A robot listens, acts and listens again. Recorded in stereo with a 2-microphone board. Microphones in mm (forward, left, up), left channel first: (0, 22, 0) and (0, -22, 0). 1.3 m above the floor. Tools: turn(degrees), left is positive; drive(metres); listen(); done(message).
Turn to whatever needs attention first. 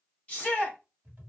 turn(degrees=30)
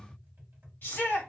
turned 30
turn(degrees=115)
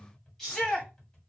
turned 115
turn(degrees=15)
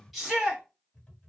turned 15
done("Found it: a shout, straight ahead, 1 to 2 m away.")